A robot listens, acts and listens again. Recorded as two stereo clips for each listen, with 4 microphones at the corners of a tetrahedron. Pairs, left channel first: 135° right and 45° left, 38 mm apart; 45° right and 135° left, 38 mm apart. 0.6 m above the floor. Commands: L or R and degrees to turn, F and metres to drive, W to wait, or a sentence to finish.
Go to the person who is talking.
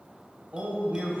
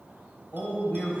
F1.0
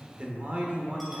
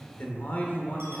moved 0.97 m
F1.0
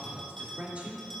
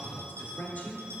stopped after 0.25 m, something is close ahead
I am next to the man speaking.